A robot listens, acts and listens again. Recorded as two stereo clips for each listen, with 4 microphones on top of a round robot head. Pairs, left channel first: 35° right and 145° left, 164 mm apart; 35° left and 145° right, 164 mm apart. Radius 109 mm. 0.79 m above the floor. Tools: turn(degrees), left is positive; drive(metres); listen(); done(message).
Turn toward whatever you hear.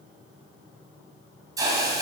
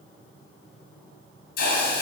turn(degrees=75)
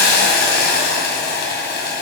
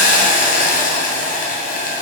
done("Facing the hiss, 2 to 4 m away.")